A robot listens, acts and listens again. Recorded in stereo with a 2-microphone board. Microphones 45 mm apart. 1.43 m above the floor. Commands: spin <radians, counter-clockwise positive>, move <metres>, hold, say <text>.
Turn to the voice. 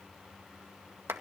hold
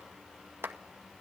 hold
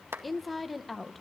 spin 0.52
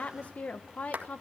spin 2.53
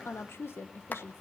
spin 1.13
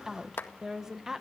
spin -0.17
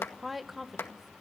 say Facing the woman speaking.